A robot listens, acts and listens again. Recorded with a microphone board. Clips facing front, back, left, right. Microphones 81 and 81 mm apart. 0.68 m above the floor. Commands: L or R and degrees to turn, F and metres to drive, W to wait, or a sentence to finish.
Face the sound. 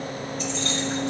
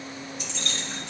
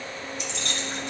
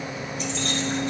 R45
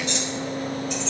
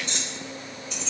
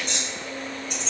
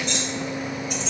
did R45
Found it: keys jangling, straight ahead, 2 to 4 m away.